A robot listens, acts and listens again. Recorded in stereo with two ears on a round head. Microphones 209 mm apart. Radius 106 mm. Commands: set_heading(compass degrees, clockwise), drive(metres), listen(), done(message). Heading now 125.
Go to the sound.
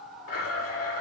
set_heading(60)
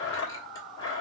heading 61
set_heading(46)
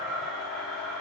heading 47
drive(1.0)
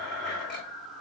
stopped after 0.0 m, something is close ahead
done("Something is in my way. I am facing the blender but have not reached it.")